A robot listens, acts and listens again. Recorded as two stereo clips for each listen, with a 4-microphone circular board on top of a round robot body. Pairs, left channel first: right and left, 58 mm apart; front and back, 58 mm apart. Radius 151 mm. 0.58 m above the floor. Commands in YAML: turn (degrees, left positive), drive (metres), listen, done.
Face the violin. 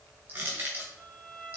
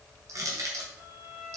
turn: -175
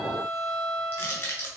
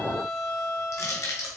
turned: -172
done: "Found it: a violin, straight ahead, 1 to 2 m away."